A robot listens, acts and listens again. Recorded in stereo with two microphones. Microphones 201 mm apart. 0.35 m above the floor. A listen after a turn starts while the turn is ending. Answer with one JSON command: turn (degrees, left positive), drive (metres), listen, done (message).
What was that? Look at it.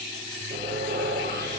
{"turn": -55}
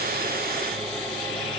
{"done": "Facing the sawing."}